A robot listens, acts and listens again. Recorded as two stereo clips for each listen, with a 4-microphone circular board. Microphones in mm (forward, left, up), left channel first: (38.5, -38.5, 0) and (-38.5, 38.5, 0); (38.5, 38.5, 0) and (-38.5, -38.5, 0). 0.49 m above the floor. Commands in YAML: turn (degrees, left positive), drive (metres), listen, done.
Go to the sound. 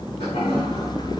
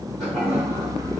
turn: -45
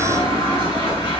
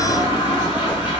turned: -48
drive: 1.0
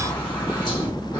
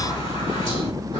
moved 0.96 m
drive: 1.0
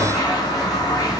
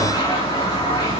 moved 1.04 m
drive: 1.0
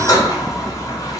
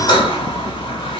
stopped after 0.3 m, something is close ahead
turn: 10
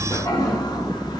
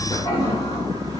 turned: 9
done: "I am next to the toilet flushing."